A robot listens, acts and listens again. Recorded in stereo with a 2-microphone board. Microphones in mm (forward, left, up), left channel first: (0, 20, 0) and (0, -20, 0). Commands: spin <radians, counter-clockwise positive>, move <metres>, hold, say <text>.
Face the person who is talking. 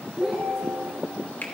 spin -0.52
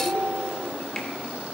hold
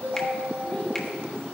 hold
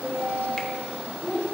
spin 0.35
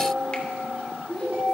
say Found it: a child speaking, straight ahead, over 4 m away.